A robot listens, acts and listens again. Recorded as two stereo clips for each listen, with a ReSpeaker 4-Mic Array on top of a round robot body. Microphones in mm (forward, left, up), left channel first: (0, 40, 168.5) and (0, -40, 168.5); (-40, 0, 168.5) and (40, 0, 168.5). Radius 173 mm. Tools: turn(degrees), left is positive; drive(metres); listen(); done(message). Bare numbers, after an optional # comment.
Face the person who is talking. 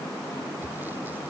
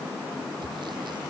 listen()
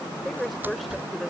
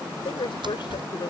# The woman speaking: straight behind.
turn(180)
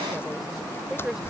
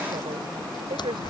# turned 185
done("Found it: a woman speaking, straight ahead.")